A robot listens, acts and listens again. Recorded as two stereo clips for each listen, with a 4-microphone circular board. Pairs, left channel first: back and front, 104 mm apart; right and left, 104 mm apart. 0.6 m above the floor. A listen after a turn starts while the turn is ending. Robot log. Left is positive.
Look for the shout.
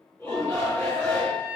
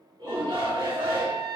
note: The shout: 125° left.
cmd yaw +125
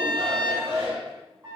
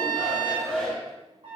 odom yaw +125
end: Facing the shout, 1 to 2 m away.